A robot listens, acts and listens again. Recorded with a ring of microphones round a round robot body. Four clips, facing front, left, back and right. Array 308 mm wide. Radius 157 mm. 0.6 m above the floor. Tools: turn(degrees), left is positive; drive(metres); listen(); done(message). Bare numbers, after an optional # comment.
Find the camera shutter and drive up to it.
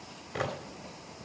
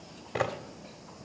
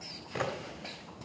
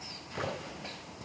# The camera shutter: 85° left.
turn(85)
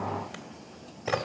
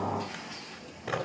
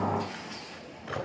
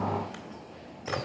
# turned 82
listen()
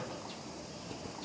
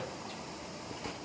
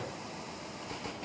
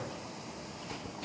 listen()
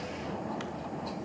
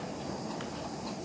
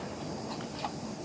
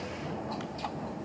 done("Facing where the camera shutter came from. I can't hear it now. I did not reach it.")